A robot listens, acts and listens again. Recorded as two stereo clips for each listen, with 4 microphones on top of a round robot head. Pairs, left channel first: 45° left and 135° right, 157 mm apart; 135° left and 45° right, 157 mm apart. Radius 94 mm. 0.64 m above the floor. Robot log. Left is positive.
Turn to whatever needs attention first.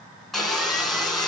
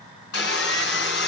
cmd idle
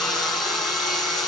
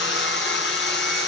cmd idle
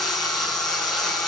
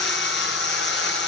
end: I can't make out anything urgent, only sawing.